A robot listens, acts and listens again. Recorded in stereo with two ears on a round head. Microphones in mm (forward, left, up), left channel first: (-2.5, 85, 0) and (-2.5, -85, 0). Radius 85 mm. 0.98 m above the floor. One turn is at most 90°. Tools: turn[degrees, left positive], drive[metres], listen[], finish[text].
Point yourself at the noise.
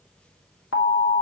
Action: turn[90]
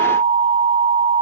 Thought: So it is at 15° right.
Action: turn[-15]
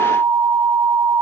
Action: finish[Facing the alarm, 1 to 2 m away.]